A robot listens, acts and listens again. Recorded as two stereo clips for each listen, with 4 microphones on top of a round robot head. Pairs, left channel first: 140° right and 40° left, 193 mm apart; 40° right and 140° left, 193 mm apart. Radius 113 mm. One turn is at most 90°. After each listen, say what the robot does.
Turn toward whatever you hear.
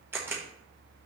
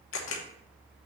Turn 40° right.
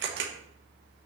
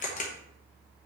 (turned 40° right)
Turn 10° left.
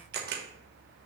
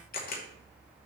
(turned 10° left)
Found it: a camera shutter, straight ahead.